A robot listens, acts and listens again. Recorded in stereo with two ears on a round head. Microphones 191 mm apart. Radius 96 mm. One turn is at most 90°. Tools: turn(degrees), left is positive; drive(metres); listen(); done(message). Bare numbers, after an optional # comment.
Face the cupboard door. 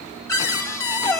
turn(30)
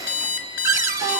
# So it is at 15° right.
turn(-15)
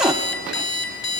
done("Facing the cupboard door.")